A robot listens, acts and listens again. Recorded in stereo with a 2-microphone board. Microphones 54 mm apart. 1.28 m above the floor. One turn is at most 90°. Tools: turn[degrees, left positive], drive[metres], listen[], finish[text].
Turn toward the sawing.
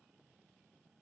Action: listen[]
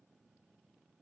Action: listen[]
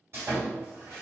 Thought: The sawing: about 50° right or 130° right.
Action: turn[-50]
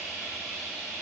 Thought: So it is at 15° right.
Action: turn[-15]
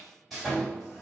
Action: finish[Facing the sawing, 1 to 2 m away.]